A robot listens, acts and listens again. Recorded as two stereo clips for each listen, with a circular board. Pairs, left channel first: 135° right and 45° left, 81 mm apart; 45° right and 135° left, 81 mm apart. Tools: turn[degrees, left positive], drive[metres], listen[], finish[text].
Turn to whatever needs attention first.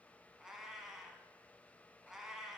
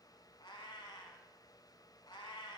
Action: listen[]
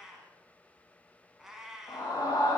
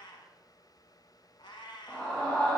Thought: The scream: 100° right.
Action: turn[-100]
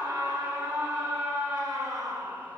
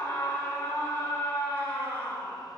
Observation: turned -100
Thought: The scream is now 10° left.
Action: turn[10]
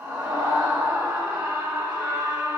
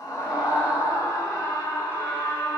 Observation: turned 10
Action: finish[Found it: a scream, straight ahead, 2 to 4 m away.]